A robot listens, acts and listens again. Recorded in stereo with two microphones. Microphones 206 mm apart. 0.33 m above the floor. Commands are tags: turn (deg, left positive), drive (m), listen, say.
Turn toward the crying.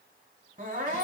<turn deg="-40"/>
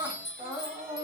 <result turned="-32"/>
<turn deg="-15"/>
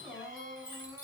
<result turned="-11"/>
<say>Facing the crying.</say>